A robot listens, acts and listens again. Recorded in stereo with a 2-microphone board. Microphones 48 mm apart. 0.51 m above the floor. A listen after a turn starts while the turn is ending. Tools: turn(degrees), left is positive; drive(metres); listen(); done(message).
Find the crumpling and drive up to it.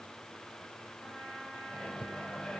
listen()
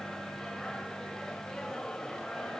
listen()
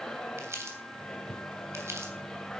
turn(degrees=-70)
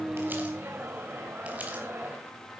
listen()
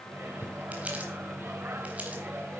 listen()
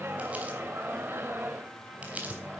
turn(degrees=-30)
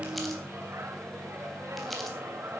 listen()
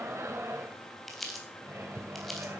drive(metres=1.0)
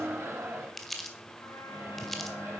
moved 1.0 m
drive(metres=1.0)
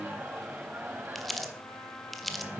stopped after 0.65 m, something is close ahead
done("Arrived at the crumpling, straight ahead.")